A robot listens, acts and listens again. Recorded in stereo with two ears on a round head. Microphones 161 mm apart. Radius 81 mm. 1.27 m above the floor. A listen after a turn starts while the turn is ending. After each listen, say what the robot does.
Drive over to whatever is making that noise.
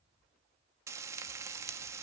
Turn 15° right.
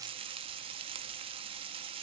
Turn 150° right.
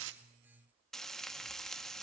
Drive 1.0 m forward.
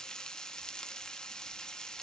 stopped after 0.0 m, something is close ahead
Blocked. The frying is further on, straight ahead.